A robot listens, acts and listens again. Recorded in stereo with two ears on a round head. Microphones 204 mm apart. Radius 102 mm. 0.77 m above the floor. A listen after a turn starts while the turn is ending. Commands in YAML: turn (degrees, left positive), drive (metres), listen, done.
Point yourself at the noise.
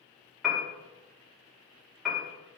turn: 30
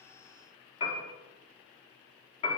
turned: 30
turn: 150
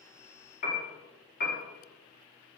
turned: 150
turn: 45
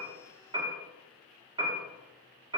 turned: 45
turn: -20
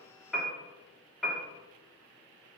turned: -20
done: "Facing the piano, 1 to 2 m away."